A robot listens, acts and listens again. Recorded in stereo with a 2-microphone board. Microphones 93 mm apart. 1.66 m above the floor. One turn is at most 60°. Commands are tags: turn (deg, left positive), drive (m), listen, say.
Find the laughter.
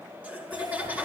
<turn deg="-15"/>
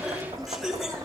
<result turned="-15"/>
<say>Found it: laughter, straight ahead, over 4 m away.</say>